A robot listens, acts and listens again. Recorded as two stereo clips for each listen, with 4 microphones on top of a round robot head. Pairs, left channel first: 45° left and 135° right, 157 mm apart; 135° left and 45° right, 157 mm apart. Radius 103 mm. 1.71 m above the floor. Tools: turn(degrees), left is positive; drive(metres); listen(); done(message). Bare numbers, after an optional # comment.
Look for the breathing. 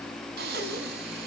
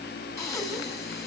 # The breathing: 155° right.
turn(-155)
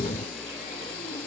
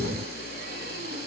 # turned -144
# The breathing is now 10° right.
turn(-10)
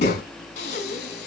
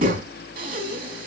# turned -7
done("Found it: breathing, straight ahead.")